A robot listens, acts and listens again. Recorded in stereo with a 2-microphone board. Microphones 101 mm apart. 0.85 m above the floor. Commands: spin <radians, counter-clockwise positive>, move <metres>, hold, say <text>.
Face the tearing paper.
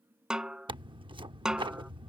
spin -0.96
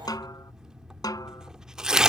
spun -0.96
say Found it: tearing paper, straight ahead.